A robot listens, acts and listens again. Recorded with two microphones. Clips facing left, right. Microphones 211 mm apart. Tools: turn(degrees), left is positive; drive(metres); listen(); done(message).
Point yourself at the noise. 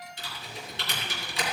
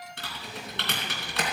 turn(degrees=-70)
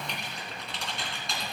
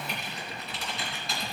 done("Facing the typing on a keyboard.")